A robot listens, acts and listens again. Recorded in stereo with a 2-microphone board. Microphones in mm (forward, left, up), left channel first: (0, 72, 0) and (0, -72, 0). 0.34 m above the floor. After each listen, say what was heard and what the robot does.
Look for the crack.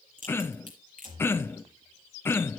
The crack: about 65° right or 115° right. Turn 65° right.
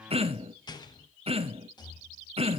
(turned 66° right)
Keep listening.
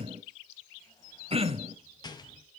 I heard a crack, but can't make it out now. It was about straight ahead or 50° right.